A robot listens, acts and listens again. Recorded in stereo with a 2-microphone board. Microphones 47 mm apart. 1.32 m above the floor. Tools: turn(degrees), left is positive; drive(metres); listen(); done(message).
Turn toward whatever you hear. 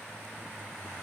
listen()
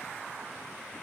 listen()
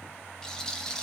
turn(degrees=30)
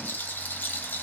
turn(degrees=140)
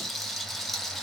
done("Facing the rattle, under 1 m away.")